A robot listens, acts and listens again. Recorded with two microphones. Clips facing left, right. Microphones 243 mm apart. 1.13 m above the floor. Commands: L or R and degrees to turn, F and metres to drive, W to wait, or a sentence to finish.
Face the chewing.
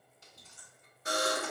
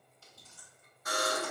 L20
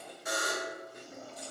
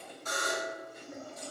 L140
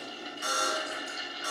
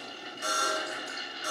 W
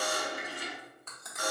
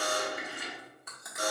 R10
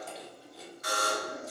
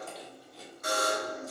Facing the chewing, 1 to 2 m away.